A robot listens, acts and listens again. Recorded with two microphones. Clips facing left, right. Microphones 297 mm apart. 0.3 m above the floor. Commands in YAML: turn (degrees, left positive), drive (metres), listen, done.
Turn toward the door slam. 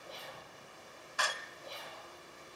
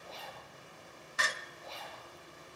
turn: -25
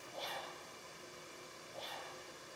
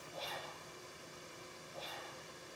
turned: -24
listen: true
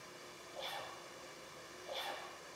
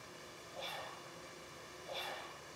done: "I heard a door slam, but can't make it out now. It was about straight ahead or 130° right."